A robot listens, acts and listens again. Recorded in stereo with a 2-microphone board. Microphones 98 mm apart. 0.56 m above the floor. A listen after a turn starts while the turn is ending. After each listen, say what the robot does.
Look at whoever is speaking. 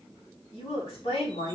Turn 90° left.
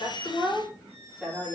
Found it: a woman speaking, straight ahead.